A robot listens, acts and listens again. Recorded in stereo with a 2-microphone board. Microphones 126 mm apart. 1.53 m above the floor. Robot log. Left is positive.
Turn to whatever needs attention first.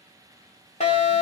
note: The fire alarm: about 70° left or 110° left.
cmd yaw +70
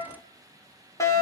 note: So it is at 30° left.
cmd yaw +30
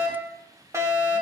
note: The fire alarm is now 25° right.
cmd yaw -25
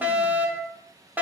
note: The fire alarm is now 15° right.
cmd yaw -15
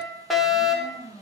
end: Found it: a fire alarm, straight ahead.